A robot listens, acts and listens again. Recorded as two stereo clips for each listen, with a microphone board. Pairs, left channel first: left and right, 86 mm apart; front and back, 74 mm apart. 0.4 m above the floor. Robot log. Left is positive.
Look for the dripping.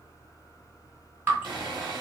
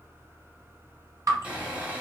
note: The dripping: 155° right.
cmd yaw -155
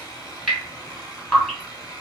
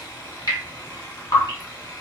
note: The dripping is now 10° left.
cmd yaw +10
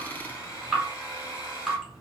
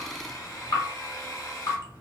end: Facing the dripping.